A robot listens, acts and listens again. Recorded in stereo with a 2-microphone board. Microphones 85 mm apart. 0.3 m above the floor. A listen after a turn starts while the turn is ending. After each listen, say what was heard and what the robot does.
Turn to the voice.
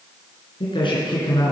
The man speaking: about 70° left or 110° left. Turn 70° left.
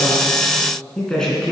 Facing the man speaking.